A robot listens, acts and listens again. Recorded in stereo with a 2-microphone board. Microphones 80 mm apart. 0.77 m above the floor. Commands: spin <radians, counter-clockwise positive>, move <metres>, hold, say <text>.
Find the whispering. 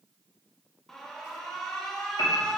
hold
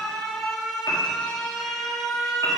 hold
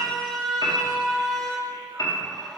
say I can't make out whispering, only an alarm and a piano.